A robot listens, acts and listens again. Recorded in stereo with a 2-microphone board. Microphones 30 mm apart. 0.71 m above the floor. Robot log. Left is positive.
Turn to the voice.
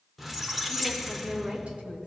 note: The woman speaking: about 40° right or 140° right.
cmd yaw -40
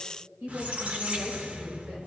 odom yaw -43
note: So it is at 105° right.
cmd yaw -105
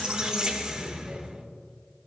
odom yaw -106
cmd idle
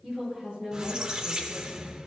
note: The woman speaking is now 10° right.
cmd yaw -10
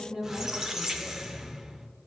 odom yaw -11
end: Found it: a woman speaking, straight ahead.